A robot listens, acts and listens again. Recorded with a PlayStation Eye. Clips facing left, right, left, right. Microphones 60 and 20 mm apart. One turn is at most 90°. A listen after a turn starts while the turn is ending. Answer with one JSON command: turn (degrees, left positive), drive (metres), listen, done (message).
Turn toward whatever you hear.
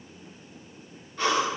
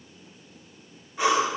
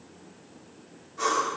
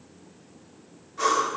{"turn": -30}
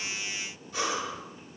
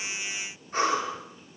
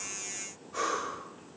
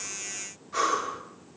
{"turn": -90}
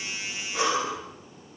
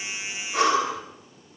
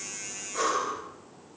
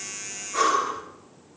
{"turn": -65}
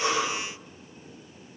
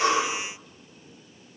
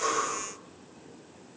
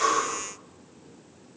{"turn": -15}
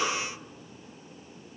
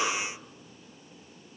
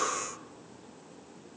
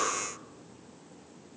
{"done": "Facing the breathing."}